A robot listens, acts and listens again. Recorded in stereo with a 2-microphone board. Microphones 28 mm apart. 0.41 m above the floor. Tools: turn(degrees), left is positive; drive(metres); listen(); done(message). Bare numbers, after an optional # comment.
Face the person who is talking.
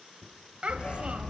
# The child speaking: about 45° right or 135° right.
turn(-45)
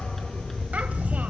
listen()
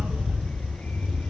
listen()
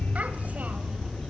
done("I heard a child speaking, but can't make it out now. It was about straight ahead or 90° right.")